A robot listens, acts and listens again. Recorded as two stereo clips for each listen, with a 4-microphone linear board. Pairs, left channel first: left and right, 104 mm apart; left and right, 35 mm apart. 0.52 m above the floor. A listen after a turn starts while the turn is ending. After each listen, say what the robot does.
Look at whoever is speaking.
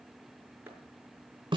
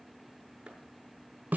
Keep listening.
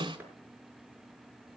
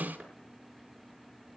Keep listening.
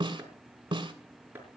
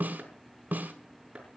I can't make out anyone speaking to turn to.